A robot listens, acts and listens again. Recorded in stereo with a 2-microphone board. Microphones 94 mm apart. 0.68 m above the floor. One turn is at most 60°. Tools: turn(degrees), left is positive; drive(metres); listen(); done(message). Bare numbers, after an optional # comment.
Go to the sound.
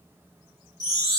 # The chime: about 35° right or 145° right.
turn(-35)
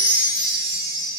# So it is at 110° right.
turn(-60)
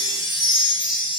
# The chime is now 50° right.
turn(-50)
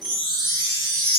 drive(1.0)
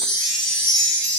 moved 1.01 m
# The chime is now 10° left.
turn(10)
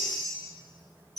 drive(1.0)
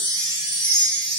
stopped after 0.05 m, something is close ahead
done("I am next to the chime.")